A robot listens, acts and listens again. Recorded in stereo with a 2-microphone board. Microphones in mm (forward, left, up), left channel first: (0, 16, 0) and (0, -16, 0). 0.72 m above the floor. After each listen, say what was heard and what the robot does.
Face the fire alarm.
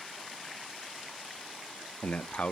Keep listening.
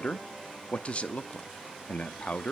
Keep listening.
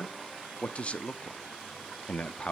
I can't make out a fire alarm to turn to.